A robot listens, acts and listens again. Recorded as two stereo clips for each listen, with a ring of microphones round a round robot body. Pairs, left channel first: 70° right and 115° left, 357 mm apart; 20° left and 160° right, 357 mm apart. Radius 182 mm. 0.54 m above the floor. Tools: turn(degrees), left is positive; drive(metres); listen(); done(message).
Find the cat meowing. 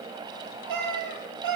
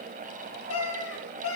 turn(degrees=75)
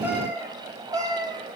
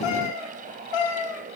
turn(degrees=35)
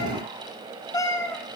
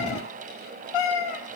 turn(degrees=15)
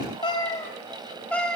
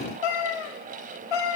turn(degrees=20)
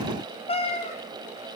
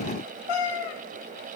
done("Facing the cat meowing.")